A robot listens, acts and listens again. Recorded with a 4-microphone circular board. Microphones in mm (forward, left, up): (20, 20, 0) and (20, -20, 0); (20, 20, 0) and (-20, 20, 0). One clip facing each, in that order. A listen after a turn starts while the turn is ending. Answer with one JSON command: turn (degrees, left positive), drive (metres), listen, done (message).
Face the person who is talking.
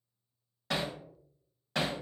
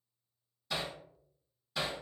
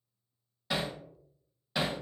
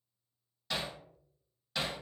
{"listen": true}
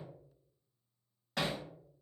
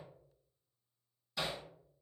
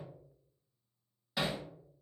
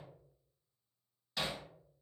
{"listen": true}
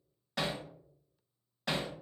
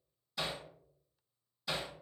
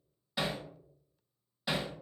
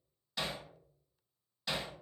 {"done": "I can't make out anyone speaking to turn to."}